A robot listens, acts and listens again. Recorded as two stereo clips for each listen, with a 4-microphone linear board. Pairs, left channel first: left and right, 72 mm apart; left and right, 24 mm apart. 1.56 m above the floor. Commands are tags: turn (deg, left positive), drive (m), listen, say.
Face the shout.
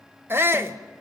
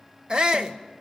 <turn deg="-30"/>
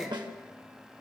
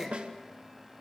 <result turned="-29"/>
<say>Found it: a shout, straight ahead.</say>